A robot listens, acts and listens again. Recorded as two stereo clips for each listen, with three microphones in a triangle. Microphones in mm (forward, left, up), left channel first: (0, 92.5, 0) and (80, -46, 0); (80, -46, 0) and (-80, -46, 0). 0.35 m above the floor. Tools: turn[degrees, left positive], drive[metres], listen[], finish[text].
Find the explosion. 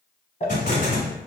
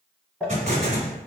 Thought: The explosion: 145° left.
Action: turn[145]
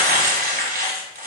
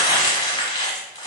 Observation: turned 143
Action: finish[I heard an explosion from this way, but can't make it out now.]